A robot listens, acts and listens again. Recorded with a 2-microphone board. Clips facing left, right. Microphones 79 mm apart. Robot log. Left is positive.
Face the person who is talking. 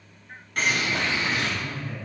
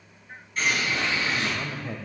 cmd yaw -90
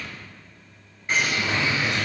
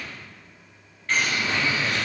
cmd idle
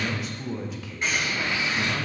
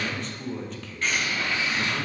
end: Found it: a man speaking, straight ahead, under 1 m away.